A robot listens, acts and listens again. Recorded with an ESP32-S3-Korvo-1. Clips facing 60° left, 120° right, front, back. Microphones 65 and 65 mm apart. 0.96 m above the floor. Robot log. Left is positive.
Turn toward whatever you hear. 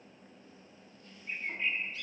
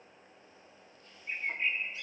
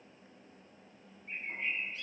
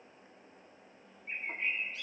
note: The bird: 170° left.
cmd yaw +170
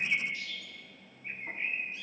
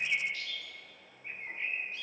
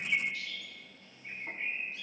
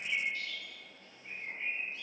note: The bird is now 10° right.
cmd yaw -10
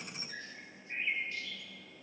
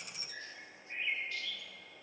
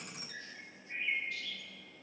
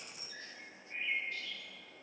end: Found it: a bird, straight ahead.